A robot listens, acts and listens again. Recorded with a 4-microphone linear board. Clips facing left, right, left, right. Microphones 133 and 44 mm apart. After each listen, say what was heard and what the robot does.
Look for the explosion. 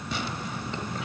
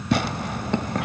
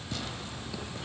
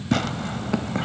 Keep listening.
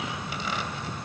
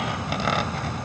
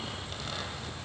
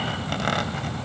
Keep listening.
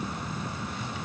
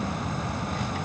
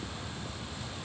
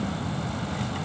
I can't make out an explosion to turn to.